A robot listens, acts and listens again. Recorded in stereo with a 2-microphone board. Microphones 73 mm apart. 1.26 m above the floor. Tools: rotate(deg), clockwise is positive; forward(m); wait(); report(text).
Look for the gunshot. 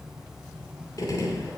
rotate(-50)
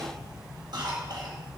wait()
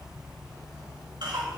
report("I heard a gunshot, but can't make it out now. It was about straight ahead or 80° left.")